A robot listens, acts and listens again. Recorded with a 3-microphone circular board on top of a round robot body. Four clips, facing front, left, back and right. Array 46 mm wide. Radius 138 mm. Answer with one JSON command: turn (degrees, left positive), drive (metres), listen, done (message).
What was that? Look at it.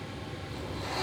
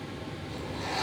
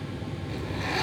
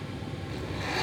{"turn": -165}
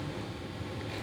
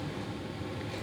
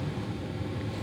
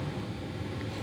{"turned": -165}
{"listen": true}
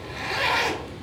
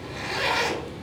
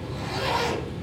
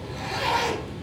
{"turn": 10}
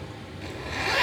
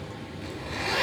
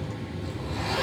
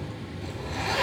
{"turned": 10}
{"done": "Found it: a zipper, straight ahead."}